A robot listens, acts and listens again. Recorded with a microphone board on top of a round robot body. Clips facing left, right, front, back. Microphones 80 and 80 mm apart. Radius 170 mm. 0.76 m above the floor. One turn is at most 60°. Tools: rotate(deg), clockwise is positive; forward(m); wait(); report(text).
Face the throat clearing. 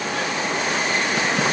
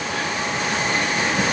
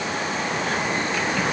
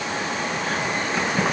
wait()
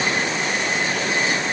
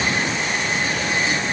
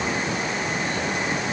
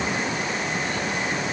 wait()
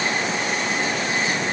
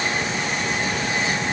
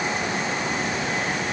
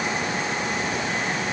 report("I can't make out throat clearing to turn to.")